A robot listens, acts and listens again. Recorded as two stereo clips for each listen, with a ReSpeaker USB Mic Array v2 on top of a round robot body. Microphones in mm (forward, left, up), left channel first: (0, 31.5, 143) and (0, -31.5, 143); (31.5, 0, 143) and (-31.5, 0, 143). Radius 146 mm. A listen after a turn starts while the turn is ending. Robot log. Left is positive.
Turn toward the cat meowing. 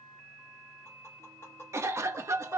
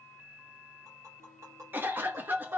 cmd idle
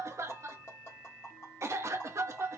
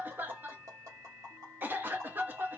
cmd idle
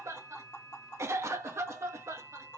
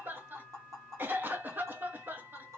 end: I can't make out a cat meowing to turn to.